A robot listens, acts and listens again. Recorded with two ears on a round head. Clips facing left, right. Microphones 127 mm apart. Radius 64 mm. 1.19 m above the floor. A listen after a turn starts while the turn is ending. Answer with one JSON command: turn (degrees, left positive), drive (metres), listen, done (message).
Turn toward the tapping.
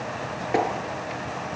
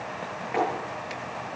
{"turn": 50}
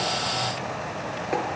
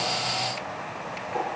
{"listen": true}
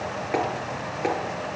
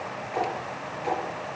{"turn": 80}
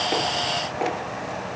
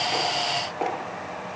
{"done": "Facing the tapping, over 4 m away."}